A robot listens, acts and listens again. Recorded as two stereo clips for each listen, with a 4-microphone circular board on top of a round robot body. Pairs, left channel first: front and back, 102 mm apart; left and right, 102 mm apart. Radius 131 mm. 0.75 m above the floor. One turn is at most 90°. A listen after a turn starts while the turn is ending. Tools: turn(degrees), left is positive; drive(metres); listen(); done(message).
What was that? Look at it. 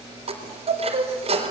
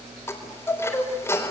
turn(degrees=90)
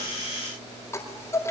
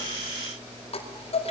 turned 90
turn(degrees=65)
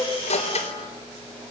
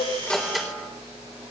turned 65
done("Facing the chime.")